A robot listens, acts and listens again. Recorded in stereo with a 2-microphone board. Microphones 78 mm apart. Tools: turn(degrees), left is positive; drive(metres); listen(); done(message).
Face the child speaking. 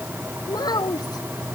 turn(degrees=65)
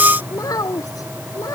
turn(degrees=50)
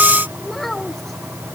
done("Found it: a child speaking, straight ahead.")